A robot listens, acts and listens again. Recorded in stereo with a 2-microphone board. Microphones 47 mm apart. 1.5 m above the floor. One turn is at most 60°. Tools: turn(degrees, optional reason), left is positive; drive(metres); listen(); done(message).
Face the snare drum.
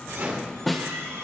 turn(degrees=30)
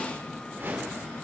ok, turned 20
listen()
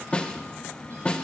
turn(degrees=60, reason="So it is at 155° left.")
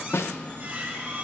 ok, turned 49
turn(degrees=60, reason="The snare drum is now 110° left.")
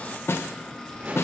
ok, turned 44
turn(degrees=60, reason="The snare drum is now 65° left.")
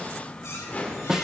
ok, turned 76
turn(degrees=-10, reason="The snare drum is now 10° right.")
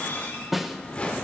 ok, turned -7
done("Found it: a snare drum, straight ahead, under 1 m away.")